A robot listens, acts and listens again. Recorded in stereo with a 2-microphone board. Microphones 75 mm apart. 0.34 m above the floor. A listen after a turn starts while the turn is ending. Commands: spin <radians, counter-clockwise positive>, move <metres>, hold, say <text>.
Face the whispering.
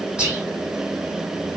spin -0.52
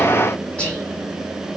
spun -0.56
spin 0.26
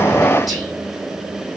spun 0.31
say Found it: whispering, straight ahead, 2 to 4 m away.